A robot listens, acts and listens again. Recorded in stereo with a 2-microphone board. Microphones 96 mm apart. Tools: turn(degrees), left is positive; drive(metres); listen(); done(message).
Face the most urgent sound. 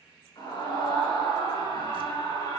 turn(degrees=50)
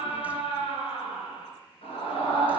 turn(degrees=80)
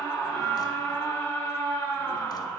turn(degrees=20)
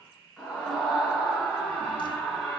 turn(degrees=10)
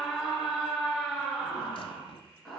done("Facing the scream.")